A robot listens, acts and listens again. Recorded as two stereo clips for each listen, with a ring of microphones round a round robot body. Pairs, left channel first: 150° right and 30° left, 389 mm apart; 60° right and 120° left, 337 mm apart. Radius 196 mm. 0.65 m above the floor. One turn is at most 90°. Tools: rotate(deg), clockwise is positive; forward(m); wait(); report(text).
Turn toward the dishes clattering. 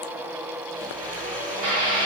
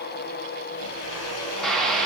rotate(-30)
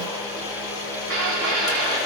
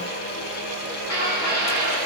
rotate(15)
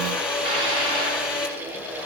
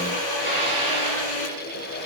wait()
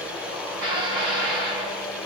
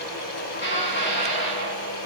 report("Found it: dishes clattering, straight ahead, over 4 m away.")